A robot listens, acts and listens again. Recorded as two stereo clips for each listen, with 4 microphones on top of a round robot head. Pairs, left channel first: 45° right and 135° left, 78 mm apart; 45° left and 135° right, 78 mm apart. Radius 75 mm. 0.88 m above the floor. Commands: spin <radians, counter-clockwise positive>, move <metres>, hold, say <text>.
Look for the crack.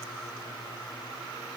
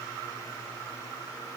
hold
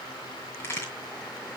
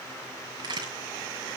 spin -1.83
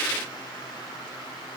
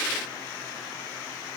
say I heard a crack from this way, but can't make it out now.